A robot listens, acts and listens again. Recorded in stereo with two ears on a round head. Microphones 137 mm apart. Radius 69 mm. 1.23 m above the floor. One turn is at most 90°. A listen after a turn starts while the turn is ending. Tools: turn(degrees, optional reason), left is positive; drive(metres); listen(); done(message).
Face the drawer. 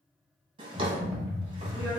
turn(degrees=-35, reason="The drawer: about 35° right or 145° right.")
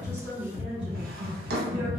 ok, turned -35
turn(degrees=-90, reason="So it is at 105° right.")
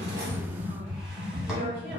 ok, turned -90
turn(degrees=-15, reason="Nothing new. It was at 15° right.")
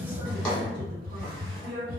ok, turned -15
done("Facing the drawer.")